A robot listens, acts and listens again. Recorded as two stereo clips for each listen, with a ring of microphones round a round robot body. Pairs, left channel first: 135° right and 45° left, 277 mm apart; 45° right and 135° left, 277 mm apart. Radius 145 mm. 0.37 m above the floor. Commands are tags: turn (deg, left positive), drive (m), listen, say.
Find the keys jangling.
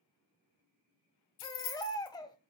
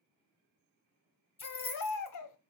<turn deg="-115"/>
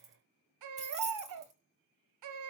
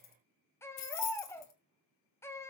<turn deg="-20"/>
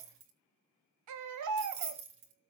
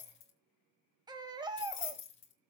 <say>Facing the keys jangling.</say>